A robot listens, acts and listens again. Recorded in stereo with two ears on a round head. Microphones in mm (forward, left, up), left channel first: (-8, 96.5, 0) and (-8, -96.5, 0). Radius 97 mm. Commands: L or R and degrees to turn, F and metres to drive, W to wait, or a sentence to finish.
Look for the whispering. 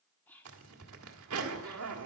L30
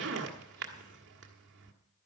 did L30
W
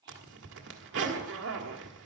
R25
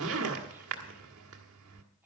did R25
R10
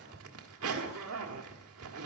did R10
W
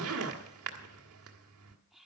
Found it: whispering, straight ahead.